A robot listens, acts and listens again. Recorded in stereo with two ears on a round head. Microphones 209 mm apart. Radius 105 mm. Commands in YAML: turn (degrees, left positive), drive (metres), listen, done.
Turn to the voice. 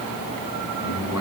turn: 90
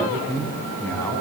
turn: 10
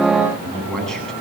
done: "Facing the man speaking, over 4 m away."